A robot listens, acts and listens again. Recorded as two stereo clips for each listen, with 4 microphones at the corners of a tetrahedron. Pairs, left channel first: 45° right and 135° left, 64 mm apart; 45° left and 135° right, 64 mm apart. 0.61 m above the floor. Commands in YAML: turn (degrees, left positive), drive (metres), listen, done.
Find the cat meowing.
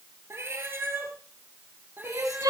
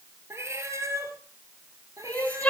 turn: -170
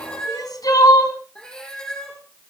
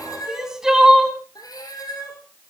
turn: 35
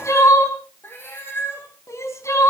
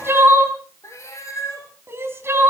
done: "Found it: a cat meowing, straight ahead."